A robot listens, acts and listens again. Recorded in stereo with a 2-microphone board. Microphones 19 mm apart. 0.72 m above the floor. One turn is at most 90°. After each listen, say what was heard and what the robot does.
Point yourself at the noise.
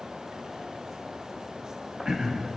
The throat clearing: about 35° right or 145° right. Turn 35° right.
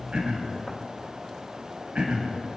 So it is at 100° right. Turn 90° right.
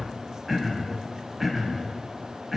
The throat clearing is now 10° right. Turn 10° right.
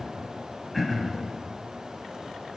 Facing the throat clearing.